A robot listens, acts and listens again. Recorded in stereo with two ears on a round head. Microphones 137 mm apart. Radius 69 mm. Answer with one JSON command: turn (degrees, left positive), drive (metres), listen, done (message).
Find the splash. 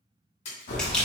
{"turn": 45}
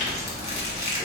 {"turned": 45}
{"listen": true}
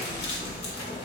{"done": "I heard a splash, but can't make it out now. It was about straight ahead or 90° left."}